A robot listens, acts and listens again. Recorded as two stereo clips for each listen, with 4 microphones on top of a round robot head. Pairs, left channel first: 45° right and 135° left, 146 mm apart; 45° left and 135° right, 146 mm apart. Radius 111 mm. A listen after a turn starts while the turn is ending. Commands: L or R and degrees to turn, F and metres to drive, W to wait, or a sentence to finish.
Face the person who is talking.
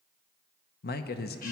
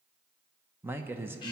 R55
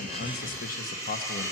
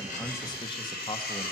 R15
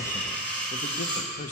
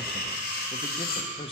Facing the man speaking, under 1 m away.